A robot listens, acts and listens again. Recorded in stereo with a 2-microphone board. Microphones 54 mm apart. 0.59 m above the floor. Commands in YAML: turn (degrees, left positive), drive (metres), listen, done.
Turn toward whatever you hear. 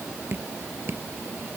turn: -45
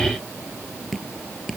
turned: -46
done: "Facing the dripping."